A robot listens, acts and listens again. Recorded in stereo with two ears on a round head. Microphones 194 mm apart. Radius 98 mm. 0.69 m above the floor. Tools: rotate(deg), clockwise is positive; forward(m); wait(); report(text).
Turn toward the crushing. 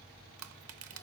rotate(70)
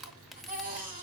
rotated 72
report("Found it: crushing, straight ahead.")